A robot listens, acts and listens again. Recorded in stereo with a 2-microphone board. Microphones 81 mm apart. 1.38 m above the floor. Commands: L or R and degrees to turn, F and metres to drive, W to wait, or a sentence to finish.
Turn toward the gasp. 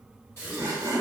L35
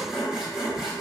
W
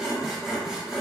I heard a gasp, but can't make it out now. It was about straight ahead or 110° left.